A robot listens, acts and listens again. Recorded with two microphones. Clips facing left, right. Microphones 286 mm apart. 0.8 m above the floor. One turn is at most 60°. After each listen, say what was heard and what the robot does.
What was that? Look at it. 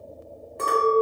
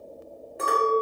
Turn 30° right.
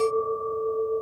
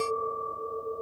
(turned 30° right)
So it is at 30° left. Turn 30° left.
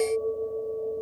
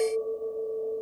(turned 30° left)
The clink is now 10° left. Turn 10° left.
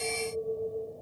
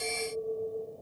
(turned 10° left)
Found it: a clink, straight ahead.